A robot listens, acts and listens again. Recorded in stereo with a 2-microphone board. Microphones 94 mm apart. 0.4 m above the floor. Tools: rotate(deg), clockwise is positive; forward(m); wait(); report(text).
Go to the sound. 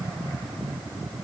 wait()
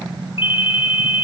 rotate(-70)
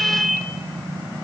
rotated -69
forward(1.0)
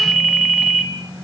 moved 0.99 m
forward(1.0)
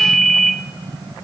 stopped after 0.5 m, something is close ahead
report("I am next to the ringtone.")